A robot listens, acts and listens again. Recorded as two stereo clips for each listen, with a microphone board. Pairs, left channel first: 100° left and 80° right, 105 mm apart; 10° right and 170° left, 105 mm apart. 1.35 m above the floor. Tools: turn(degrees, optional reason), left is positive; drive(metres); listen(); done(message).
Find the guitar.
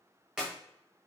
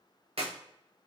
listen()
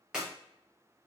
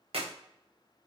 listen()
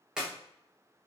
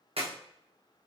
done("I can't make out a guitar to turn to.")